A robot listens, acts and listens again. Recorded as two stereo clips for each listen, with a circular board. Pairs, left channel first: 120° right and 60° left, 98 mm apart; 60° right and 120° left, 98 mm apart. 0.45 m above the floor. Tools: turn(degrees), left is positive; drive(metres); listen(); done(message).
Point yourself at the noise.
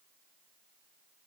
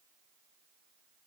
listen()
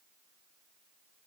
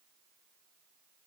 listen()
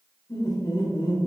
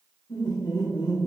turn(degrees=-100)
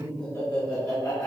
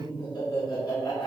turn(degrees=-65)
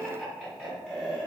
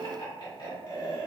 turn(degrees=-30)
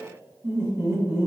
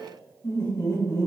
done("Facing the laughter.")